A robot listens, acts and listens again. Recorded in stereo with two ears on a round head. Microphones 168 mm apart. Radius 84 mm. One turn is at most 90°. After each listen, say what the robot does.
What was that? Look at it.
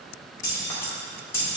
Turn 15° left.
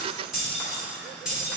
Turn 30° right.
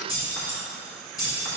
Turn 20° left.
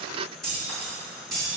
Facing the keys jangling.